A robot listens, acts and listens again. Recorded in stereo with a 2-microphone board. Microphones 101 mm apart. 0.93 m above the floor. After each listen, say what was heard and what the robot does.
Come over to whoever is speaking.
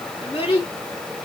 The child speaking: about 65° left or 115° left. Turn 65° left.
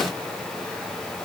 Keep listening.
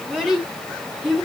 Drive 1.0 m forward.
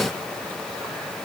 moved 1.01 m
Keep listening.
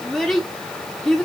Drive 1.0 m forward.
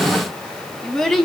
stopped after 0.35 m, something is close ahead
Arrived at the child speaking, straight ahead.